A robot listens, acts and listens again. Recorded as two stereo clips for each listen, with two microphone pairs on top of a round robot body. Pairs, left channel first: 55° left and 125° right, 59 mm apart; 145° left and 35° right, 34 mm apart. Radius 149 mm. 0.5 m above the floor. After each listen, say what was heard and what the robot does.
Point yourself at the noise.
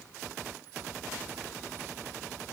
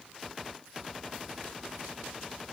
Keep listening.
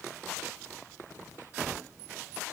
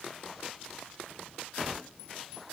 Keep listening.
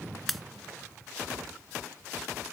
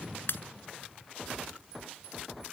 The pop: 145° left. Turn 145° left.
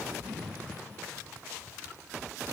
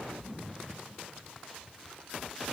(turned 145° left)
Facing where the pop came from. I can't hear it now.